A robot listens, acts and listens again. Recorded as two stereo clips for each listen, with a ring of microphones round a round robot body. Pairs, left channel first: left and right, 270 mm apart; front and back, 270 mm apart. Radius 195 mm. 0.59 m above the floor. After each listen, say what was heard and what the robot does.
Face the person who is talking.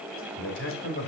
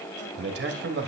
The man speaking: 135° left. Turn 135° left.
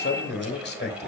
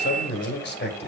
The man speaking is now 45° left. Turn 45° left.
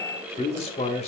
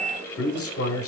The man speaking is now 25° left. Turn 25° left.
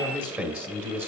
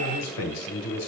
Facing the man speaking.